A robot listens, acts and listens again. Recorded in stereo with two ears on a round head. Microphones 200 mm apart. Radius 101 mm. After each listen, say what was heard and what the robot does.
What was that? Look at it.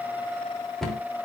Turn 30° left.
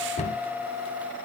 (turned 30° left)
So it is at 145° left. Turn 145° left.
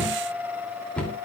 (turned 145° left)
Found it: a cupboard door, straight ahead, 2 to 4 m away.